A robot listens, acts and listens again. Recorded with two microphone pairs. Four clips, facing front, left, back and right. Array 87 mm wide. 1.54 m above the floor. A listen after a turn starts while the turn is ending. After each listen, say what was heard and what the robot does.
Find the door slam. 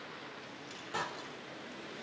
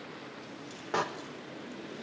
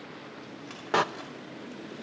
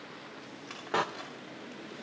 The door slam: 175° left. Turn 175° left.
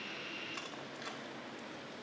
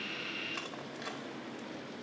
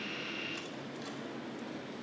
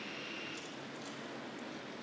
Facing where the door slam came from. I can't hear it now.